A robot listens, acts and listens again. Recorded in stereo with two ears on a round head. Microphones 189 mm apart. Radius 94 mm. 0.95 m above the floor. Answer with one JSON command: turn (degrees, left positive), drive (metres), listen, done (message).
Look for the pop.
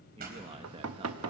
{"turn": -50}
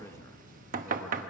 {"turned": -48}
{"listen": true}
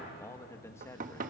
{"done": "I heard a pop, but can't make it out now. It was about straight ahead or 85° right."}